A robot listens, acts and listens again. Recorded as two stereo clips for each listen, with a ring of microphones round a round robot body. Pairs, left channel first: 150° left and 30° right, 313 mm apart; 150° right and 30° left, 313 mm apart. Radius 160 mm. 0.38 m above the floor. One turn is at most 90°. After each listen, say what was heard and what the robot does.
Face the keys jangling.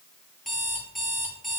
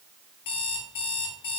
Keep listening.
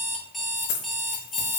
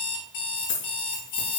The keys jangling: 175° right. Turn 90° right.
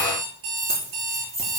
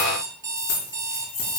The keys jangling is now 100° right. Turn 90° right.
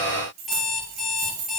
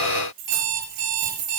The keys jangling is now 15° left. Turn 15° left.
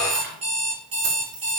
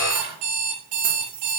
Found it: keys jangling, straight ahead, over 4 m away.